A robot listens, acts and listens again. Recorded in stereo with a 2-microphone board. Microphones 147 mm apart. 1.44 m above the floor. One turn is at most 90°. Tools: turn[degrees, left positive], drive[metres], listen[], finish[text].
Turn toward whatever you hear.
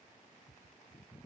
Action: listen[]
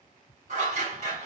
Thought: The scissors: about 55° right or 125° right.
Action: turn[-55]
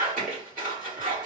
Thought: So it is at 70° right.
Action: turn[-70]
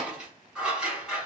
Action: finish[Found it: scissors, straight ahead.]